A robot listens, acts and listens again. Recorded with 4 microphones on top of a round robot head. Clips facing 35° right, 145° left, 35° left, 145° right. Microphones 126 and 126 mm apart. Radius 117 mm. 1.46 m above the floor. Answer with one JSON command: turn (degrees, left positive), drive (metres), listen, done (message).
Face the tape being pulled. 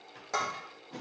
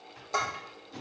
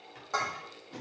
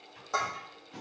{"turn": -10}
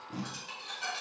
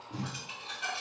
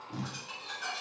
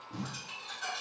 {"done": "Facing the tape being pulled, 1 to 2 m away."}